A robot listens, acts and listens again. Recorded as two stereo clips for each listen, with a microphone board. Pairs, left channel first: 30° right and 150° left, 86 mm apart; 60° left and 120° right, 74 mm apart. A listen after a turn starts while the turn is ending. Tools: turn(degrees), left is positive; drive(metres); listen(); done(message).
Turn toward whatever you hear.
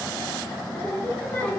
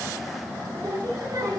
turn(degrees=-100)
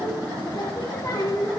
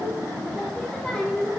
turn(degrees=-15)
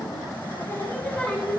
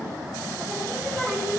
done("Found it: singing, straight ahead.")